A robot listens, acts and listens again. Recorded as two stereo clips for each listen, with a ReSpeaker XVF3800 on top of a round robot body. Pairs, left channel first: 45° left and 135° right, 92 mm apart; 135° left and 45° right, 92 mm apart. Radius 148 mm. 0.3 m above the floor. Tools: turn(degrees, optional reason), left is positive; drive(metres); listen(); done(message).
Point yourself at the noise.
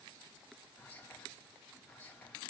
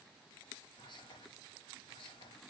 turn(degrees=115, reason="The whispering: 115° left.")
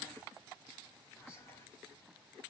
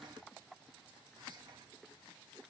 turn(degrees=-15, reason="The whispering is now 15° right.")
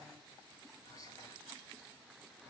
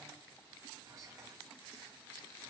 done("Facing the whispering, 2 to 4 m away.")